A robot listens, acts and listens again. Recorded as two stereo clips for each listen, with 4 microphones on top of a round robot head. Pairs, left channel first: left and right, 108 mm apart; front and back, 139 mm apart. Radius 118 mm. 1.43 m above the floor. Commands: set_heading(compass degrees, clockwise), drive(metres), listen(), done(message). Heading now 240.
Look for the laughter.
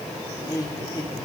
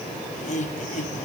set_heading(210)
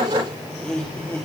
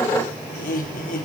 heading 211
set_heading(196)
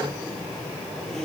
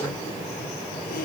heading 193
done("Facing the laughter.")